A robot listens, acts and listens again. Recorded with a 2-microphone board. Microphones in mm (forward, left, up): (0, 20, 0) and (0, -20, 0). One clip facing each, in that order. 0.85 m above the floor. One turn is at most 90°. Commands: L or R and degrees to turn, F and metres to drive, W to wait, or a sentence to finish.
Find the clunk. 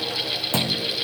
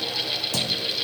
L30
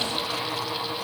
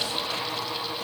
W
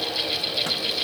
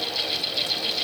I heard a clunk, but can't make it out now. It was about straight ahead or 120° left.